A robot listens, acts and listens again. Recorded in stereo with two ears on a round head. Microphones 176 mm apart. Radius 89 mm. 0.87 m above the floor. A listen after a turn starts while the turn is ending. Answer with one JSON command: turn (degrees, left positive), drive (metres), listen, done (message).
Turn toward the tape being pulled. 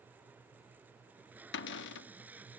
{"turn": -30}
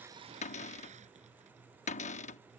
{"listen": true}
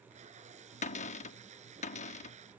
{"turn": -140}
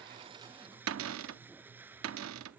{"turn": -10}
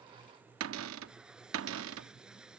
{"done": "Facing the tape being pulled."}